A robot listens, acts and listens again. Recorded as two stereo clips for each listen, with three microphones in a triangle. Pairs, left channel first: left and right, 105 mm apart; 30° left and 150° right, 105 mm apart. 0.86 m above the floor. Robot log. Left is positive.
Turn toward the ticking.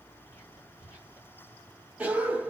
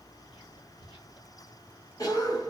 cmd idle
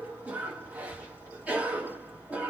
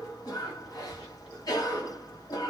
cmd idle
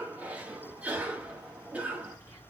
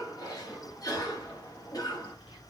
end: I can't make out ticking to turn to.